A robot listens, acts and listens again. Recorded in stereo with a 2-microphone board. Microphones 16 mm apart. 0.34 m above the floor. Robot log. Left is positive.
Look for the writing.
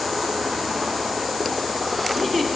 cmd idle
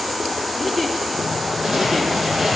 note: The writing: about 35° right or 145° right.
cmd yaw -35
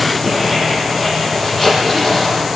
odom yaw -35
end: Found it: writing, straight ahead, over 4 m away.